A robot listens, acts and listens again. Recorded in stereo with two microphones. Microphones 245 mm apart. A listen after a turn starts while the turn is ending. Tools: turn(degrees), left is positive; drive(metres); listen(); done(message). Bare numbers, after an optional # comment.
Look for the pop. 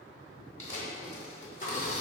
# The pop: about 30° left or 150° left.
turn(30)
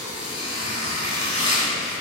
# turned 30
listen()
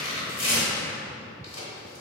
done("I heard a pop, but can't make it out now. It was about straight ahead or 120° left.")